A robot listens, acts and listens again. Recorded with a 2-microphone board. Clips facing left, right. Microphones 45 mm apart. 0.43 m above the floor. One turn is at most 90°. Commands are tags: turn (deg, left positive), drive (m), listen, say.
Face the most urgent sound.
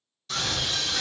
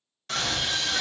<turn deg="-50"/>
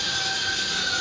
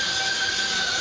<turn deg="-60"/>
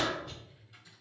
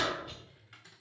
<turn deg="-10"/>
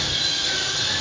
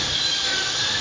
<say>Found it: a scream, straight ahead, 1 to 2 m away.</say>